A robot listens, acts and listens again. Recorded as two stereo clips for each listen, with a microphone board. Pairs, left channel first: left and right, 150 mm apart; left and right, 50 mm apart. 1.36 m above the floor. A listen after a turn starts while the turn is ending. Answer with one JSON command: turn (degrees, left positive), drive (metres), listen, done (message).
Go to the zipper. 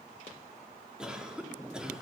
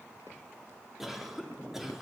{"listen": true}
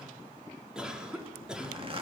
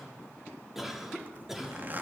{"turn": -40}
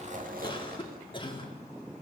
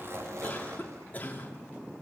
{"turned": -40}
{"listen": true}
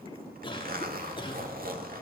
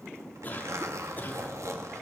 {"turn": -100}
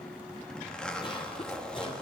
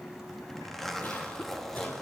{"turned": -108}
{"drive": 1.0}
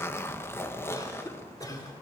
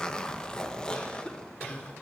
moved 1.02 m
{"turn": 15}
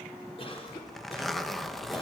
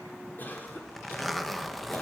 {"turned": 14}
{"drive": 1.0}
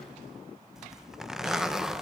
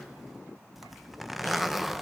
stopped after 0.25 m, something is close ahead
{"done": "I am next to the zipper."}